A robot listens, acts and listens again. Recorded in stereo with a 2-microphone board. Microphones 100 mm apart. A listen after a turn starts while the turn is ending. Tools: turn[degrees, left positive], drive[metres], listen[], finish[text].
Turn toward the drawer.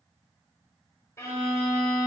Action: listen[]
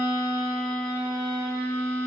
Action: listen[]
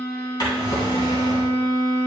Thought: The drawer: about 45° left or 135° left.
Action: turn[45]
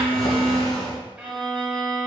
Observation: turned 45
Thought: So it is at 90° left.
Action: turn[90]
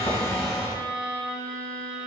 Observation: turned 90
Thought: The drawer is now 10° right.
Action: turn[-10]
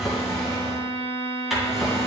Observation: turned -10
Action: finish[Found it: a drawer, straight ahead.]